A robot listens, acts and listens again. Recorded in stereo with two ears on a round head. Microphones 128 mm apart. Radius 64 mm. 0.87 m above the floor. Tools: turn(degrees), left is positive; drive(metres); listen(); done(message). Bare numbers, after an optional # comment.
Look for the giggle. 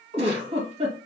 # The giggle: about 45° right or 135° right.
turn(-45)
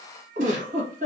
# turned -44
# So it is at 80° right.
turn(-80)
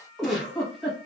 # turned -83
done("Found it: a giggle, straight ahead.")